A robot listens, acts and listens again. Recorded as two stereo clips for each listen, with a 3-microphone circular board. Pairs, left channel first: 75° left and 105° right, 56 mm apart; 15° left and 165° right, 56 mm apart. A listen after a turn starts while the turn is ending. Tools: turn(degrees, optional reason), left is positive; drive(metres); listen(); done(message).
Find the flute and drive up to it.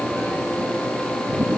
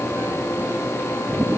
listen()
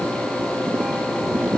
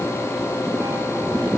listen()
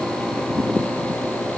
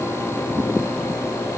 done("I can't make out a flute.")